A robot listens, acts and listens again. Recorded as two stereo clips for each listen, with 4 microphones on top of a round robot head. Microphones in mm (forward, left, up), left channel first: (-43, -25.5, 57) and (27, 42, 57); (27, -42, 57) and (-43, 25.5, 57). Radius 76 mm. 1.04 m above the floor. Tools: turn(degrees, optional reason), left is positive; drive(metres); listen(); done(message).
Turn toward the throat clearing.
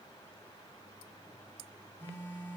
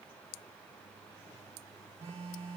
listen()
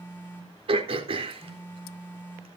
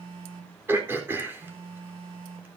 turn(degrees=70, reason="The throat clearing: 70° left.")
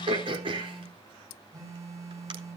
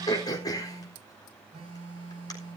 turn(degrees=10, reason="The throat clearing is now 10° left.")
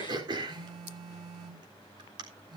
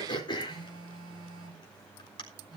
done("Found it: throat clearing, straight ahead.")